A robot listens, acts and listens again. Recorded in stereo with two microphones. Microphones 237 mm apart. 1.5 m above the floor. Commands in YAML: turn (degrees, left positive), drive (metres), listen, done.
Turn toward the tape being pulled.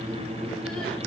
listen: true
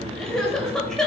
listen: true
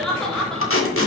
turn: 65
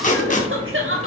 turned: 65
turn: 35
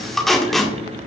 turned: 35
done: "Found it: tape being pulled, straight ahead."